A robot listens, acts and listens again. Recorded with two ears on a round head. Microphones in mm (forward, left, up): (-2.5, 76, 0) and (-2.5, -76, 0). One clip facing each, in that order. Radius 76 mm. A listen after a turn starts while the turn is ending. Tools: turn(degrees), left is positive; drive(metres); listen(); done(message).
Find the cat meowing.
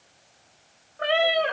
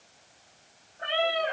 turn(degrees=90)
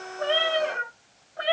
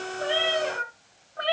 done("Found it: a cat meowing, straight ahead, 2 to 4 m away.")